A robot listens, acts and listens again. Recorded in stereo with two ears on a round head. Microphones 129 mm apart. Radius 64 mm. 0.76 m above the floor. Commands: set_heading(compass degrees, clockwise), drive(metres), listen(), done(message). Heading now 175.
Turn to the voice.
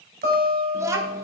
set_heading(195)
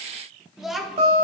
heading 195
done("Found it: a child speaking, straight ahead.")